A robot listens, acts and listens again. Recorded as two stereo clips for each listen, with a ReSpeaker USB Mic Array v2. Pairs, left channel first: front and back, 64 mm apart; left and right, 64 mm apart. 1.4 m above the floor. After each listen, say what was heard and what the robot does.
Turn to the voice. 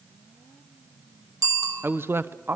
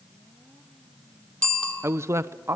The man speaking: 130° right. Turn 130° right.
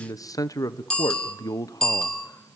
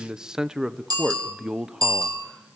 The man speaking is now 10° right. Turn 10° right.
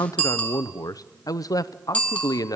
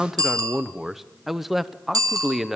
Found it: a man speaking, straight ahead.